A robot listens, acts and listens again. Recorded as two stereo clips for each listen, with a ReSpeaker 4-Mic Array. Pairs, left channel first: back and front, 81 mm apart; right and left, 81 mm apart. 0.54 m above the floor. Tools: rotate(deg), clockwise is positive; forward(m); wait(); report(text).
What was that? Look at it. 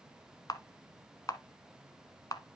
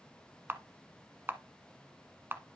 rotate(-150)
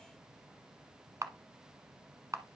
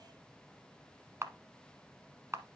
rotate(-40)
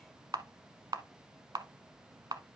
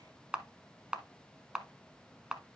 rotate(-15)
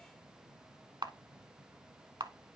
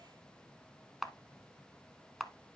report("Found it: a camera shutter, straight ahead.")